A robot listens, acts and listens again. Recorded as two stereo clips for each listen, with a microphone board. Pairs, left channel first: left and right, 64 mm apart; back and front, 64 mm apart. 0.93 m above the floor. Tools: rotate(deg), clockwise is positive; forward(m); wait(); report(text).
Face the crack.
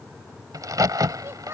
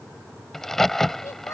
rotate(95)
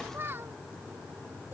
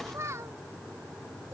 report("I heard a crack from this way, but can't make it out now.")